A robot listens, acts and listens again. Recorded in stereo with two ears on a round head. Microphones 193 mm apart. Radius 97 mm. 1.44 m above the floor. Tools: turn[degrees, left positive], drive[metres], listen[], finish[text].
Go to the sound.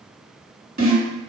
Thought: The snare drum: about 40° right or 140° right.
Action: turn[-40]
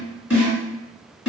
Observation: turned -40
Thought: So it is at 10° right.
Action: turn[-10]
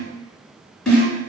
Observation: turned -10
Action: drive[1.0]
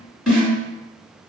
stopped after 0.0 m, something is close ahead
Action: finish[Blocked. The snare drum is further on, straight ahead.]